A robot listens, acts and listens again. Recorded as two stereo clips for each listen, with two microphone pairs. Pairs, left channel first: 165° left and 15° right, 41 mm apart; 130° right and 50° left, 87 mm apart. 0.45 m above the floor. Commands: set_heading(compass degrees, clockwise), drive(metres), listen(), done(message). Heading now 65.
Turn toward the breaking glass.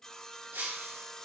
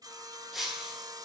set_heading(105)
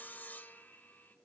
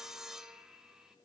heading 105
done("Facing where the breaking glass came from. I can't hear it now.")